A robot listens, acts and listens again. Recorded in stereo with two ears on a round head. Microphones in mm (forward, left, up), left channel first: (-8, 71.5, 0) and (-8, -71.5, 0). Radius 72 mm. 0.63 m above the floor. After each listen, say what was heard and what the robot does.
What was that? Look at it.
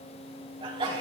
The sneeze: about 30° right or 150° right. Turn 30° right.
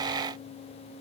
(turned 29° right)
Keep listening.
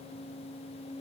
I heard a sneeze, but can't make it out now. It was about 5° right or 120° right.